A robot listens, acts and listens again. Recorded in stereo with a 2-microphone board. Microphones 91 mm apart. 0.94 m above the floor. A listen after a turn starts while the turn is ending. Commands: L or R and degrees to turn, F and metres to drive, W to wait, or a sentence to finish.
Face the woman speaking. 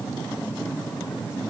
W
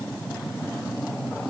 W
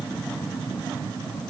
I can't make out a woman speaking.